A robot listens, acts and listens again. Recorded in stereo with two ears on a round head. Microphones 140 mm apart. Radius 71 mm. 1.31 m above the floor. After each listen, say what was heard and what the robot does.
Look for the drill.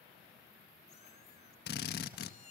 The drill: about 65° left or 115° left. Turn 65° left.
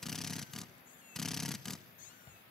Found it: a drill, straight ahead.